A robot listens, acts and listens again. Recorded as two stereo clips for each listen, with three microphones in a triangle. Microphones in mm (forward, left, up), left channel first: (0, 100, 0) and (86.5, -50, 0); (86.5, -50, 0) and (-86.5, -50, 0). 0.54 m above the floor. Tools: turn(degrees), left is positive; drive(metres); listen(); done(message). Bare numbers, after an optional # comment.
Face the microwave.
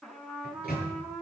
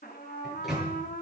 # The microwave: 90° left.
turn(90)
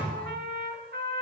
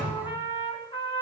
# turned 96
done("Found it: a microwave, straight ahead, over 4 m away.")